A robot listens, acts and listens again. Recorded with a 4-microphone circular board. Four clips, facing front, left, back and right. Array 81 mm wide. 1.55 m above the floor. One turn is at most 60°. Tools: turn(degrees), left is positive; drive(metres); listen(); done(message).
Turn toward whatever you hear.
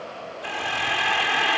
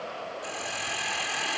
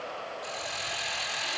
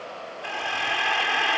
turn(degrees=-40)
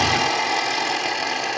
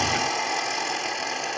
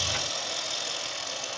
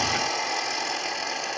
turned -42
done("Found it: a hiss, straight ahead.")